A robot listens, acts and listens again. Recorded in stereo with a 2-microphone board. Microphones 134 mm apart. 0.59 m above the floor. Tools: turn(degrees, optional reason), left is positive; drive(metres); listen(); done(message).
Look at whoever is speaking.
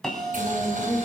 turn(degrees=-55, reason="The woman speaking: about 55° right or 125° right.")
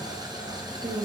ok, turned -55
turn(degrees=-65, reason="So it is at 65° right.")
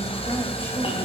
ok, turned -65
listen()
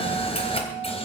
listen()
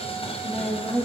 turn(degrees=15, reason="The woman speaking is now 15° left.")
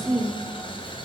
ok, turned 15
done("Facing the woman speaking.")